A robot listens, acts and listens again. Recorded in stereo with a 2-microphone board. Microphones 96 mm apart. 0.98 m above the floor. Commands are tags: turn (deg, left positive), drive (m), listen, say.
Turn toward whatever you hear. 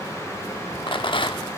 <turn deg="60"/>
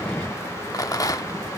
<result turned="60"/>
<turn deg="45"/>
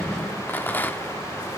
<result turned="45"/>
<turn deg="25"/>
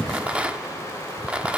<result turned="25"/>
<turn deg="-15"/>
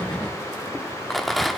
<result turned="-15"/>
<say>Found it: a rattle, straight ahead, under 1 m away.</say>